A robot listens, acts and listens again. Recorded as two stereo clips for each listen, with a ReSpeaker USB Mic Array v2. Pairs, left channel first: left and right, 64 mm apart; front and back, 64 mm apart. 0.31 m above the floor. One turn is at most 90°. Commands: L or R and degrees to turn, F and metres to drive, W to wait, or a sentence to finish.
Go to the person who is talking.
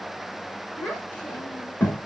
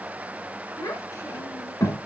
L25
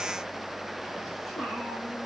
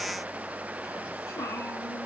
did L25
W
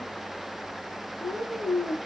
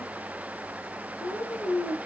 F1.0
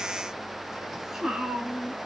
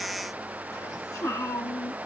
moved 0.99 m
R10
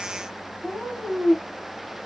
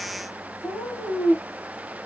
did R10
F1.0
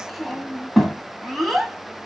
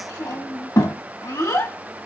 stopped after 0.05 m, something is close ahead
I am next to the child speaking.